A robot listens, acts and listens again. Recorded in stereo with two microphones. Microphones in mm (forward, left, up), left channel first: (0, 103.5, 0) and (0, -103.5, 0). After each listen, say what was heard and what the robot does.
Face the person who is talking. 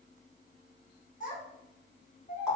The child speaking: about 40° left or 140° left. Turn 40° left.
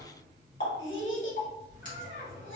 So it is at 100° left. Turn 100° left.
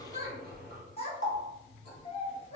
The child speaking is now 30° left. Turn 30° left.
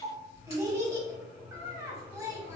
The child speaking is now 15° right. Turn 15° right.
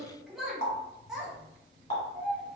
Facing the child speaking, 1 to 2 m away.